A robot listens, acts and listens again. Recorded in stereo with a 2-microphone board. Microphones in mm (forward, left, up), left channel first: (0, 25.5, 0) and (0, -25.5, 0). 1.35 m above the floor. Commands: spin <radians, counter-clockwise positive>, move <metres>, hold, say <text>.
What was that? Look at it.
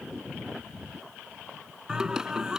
spin -0.52
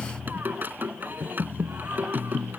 spin -2.36
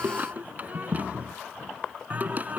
spin -0.61
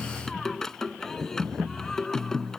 spin 0.17
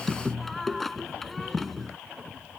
say Facing the singing.